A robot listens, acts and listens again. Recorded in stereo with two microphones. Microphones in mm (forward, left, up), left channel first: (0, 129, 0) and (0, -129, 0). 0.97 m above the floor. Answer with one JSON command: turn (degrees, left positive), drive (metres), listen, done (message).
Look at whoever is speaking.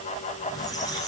{"listen": true}
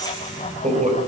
{"turn": -25}
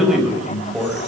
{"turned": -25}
{"done": "Facing the man speaking."}